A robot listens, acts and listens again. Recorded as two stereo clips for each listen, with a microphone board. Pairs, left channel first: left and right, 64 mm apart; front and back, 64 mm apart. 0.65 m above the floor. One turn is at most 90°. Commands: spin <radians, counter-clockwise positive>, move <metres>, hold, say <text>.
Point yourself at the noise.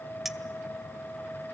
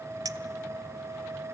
spin -1.57
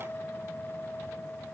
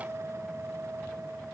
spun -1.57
spin -1.48
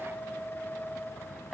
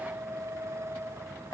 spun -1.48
hold
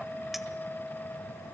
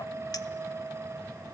say I heard a clink from this way, but can't make it out now.